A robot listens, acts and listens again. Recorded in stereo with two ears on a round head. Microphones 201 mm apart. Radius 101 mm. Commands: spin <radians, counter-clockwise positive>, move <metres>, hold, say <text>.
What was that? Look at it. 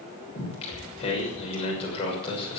spin 0.44
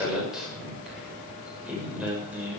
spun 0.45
say Facing the singing, over 4 m away.